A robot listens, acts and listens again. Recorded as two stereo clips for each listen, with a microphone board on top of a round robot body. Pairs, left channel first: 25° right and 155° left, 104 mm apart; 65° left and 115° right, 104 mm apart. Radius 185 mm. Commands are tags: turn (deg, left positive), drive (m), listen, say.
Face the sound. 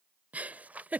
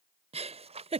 <turn deg="-125"/>
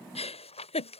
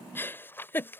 <say>Found it: a giggle, straight ahead.</say>